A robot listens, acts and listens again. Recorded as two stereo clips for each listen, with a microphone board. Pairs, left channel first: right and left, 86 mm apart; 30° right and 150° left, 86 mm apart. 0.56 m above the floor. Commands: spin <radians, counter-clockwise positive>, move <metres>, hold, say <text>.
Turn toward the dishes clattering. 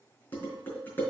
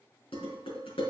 spin -0.35
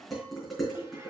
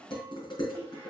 say Found it: dishes clattering, straight ahead.